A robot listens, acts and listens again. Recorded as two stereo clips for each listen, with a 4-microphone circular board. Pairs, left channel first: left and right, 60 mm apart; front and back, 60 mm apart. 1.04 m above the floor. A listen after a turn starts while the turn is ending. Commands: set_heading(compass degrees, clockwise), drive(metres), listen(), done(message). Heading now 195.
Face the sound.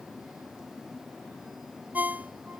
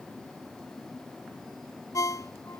set_heading(220)
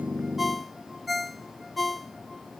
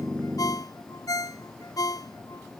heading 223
done("Facing the ringtone.")